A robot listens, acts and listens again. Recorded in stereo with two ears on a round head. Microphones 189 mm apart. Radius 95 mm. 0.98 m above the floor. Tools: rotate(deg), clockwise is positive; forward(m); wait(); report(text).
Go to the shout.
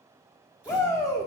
rotate(-15)
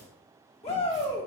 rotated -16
rotate(-150)
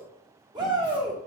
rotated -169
rotate(20)
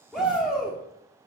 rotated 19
forward(1.0)
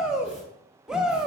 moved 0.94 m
forward(1.0)
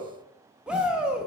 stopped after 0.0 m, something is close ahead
report("Arrived at the shout, straight ahead.")